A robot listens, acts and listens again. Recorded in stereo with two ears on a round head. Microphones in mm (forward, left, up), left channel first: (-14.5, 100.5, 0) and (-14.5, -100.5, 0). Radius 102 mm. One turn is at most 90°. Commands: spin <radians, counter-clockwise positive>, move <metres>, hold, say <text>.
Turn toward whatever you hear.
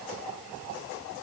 hold
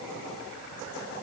hold
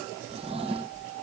spin -0.44
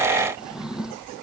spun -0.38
say Found it: a drawer, straight ahead.